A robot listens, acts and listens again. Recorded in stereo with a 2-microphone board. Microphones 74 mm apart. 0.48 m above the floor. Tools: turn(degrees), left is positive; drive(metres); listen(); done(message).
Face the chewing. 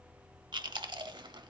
turn(degrees=-90)
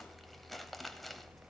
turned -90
done("Found it: chewing, straight ahead, under 1 m away.")